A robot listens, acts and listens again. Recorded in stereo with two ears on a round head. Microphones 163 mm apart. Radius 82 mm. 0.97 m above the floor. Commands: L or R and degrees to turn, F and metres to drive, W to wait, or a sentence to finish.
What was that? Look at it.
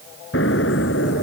L70
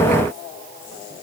W
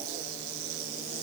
I heard an explosion, but can't make it out now. It was about straight ahead or 40° left.